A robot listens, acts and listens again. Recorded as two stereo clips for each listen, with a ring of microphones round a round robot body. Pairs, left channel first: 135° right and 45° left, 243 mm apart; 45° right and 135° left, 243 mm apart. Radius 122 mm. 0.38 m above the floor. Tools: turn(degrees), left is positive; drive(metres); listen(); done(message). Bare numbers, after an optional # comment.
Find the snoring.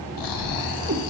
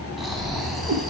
# The snoring: 135° right.
turn(-135)
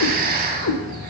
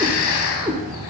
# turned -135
# The snoring is now 10° right.
turn(-10)
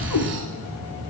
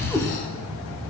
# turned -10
done("Found it: snoring, straight ahead, under 1 m away.")